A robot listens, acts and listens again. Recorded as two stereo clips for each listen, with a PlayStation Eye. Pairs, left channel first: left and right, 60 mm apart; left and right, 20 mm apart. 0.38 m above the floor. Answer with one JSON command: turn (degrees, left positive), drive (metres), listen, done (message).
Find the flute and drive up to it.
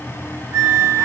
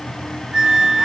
{"turn": -70}
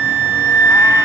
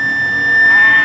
{"turn": -40}
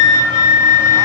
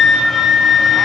{"turn": -15}
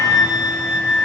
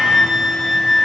{"drive": 1.0}
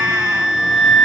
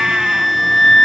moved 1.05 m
{"drive": 1.0}
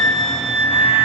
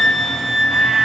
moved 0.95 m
{"drive": 1.0}
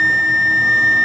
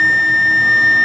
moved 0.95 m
{"drive": 1.0}
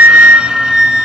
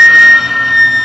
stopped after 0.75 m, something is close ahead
{"turn": -15}
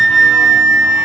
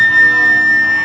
{"done": "I am next to the flute."}